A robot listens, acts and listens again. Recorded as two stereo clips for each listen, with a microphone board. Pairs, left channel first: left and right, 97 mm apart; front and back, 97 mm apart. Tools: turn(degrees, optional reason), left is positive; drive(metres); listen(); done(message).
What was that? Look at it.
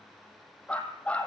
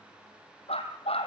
turn(degrees=10, reason="The dog barking: 10° left.")
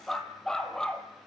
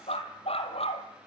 done("Found it: a dog barking, straight ahead, 2 to 4 m away.")